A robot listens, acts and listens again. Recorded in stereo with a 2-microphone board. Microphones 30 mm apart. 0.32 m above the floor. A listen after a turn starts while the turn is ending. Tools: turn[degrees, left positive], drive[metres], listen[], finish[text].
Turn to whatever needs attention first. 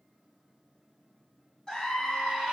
Thought: The scream: about 20° left or 160° left.
Action: turn[20]
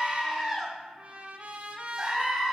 Action: finish[Found it: a scream, straight ahead, 2 to 4 m away.]